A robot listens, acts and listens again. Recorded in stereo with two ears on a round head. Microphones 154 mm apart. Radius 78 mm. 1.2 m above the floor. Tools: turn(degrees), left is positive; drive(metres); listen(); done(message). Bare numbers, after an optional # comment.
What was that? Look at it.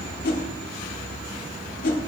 # The whoosh: about 55° left or 125° left.
turn(55)
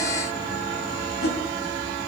listen()
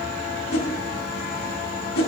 # So it is at 65° left.
turn(65)
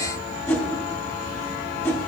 # The whoosh is now 15° left.
turn(15)
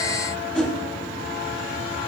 done("Facing the whoosh.")